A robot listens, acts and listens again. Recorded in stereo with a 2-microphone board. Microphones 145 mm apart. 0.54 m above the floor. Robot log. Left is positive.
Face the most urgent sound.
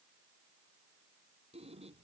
cmd idle
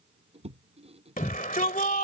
note: The shout: about 70° left or 110° left.
cmd yaw +70
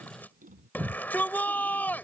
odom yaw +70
note: So it is at 15° left.
cmd yaw +15
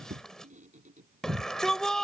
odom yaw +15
end: Facing the shout.